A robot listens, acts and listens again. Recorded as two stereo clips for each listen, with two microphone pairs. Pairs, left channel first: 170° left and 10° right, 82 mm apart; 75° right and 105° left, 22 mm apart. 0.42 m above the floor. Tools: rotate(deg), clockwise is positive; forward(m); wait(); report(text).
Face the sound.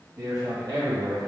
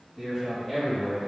report("Facing the man speaking.")